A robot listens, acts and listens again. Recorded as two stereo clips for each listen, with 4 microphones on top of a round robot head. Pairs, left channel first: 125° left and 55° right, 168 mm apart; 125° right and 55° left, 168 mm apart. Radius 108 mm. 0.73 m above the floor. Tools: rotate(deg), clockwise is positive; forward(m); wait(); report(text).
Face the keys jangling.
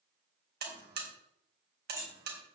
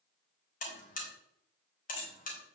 rotate(130)
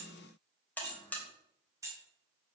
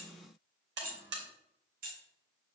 rotate(-20)
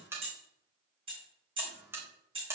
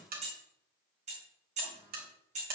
report("Facing the keys jangling, over 4 m away.")